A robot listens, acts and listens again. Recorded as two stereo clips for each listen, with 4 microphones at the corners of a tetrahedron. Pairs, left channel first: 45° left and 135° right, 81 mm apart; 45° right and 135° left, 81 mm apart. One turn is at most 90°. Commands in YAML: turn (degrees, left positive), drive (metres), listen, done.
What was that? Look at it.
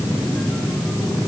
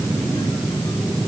listen: true
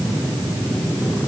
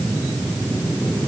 listen: true
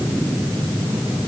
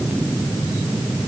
done: "I can't make out anything."